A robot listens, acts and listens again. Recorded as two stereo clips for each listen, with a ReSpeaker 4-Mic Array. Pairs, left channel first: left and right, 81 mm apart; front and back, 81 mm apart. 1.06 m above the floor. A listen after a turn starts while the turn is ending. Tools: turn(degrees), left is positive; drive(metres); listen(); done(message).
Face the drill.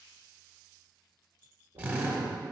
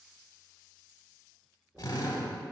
turn(degrees=-25)
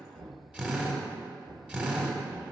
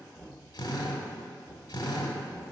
turn(degrees=-15)
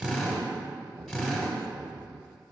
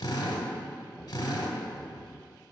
done("Found it: a drill, straight ahead.")